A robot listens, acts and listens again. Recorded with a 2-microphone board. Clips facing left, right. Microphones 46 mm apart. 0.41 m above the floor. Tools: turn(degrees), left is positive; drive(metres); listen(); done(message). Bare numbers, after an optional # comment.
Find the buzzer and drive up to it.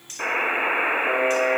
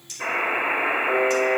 # The buzzer: about 65° left or 115° left.
turn(65)
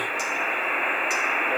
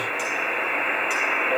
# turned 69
# So it is at 15° left.
turn(15)
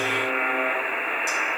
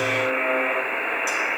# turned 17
drive(1.0)
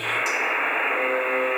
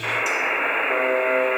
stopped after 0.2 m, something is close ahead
done("Blocked. The buzzer is further on, straight ahead.")